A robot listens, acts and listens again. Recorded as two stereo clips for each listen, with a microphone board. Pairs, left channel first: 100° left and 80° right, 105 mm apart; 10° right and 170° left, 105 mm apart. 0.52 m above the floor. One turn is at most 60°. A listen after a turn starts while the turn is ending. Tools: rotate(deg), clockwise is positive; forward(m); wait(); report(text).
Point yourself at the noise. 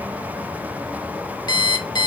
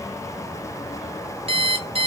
rotate(-60)
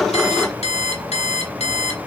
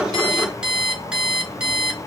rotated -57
rotate(-60)
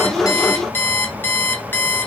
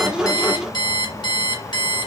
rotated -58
rotate(-30)
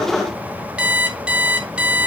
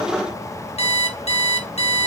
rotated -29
report("Found it: an alarm clock, straight ahead, under 1 m away.")